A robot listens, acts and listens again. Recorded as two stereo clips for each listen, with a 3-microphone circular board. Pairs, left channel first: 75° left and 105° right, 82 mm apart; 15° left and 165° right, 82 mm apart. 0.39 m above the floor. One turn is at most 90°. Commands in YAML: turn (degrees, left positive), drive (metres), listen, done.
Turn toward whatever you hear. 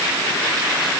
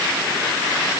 listen: true
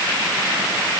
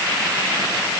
listen: true
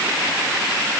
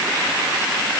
done: "I can't make out anything to turn to."